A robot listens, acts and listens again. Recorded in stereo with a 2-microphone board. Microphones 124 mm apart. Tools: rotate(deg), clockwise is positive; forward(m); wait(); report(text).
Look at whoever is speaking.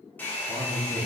rotate(90)
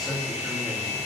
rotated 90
report("Found it: a man speaking, straight ahead.")